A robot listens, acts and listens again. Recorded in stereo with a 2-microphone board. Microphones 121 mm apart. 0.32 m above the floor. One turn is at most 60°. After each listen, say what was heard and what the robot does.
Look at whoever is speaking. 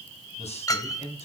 The man speaking: about 60° left or 120° left. Turn 60° left.
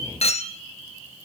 Keep listening.
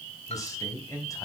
So it is at 30° left. Turn 30° left.
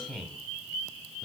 Facing the man speaking, 2 to 4 m away.